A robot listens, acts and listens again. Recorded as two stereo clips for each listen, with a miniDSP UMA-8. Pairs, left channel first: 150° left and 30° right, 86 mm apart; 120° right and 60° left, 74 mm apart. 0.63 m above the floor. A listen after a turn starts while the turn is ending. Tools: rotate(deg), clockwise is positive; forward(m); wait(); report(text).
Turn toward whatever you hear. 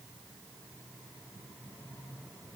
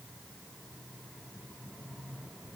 wait()
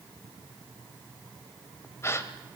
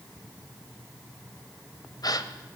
rotate(150)
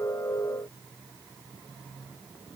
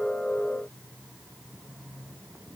report("Facing where the gasp came from. I can't hear it now.")